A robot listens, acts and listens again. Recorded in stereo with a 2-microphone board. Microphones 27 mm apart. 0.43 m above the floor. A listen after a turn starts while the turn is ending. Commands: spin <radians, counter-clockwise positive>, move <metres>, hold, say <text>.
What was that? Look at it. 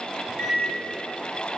spin 0.79
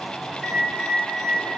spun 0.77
spin 0.17
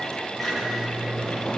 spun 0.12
say Found it: a microwave, straight ahead.